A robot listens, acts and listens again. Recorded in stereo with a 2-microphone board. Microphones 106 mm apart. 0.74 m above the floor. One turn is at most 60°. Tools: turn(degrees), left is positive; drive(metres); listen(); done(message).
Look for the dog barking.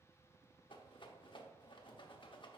listen()
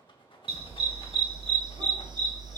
turn(degrees=-40)
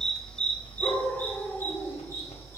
turn(degrees=25)
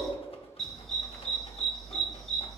done("Found it: a dog barking, straight ahead, 1 to 2 m away.")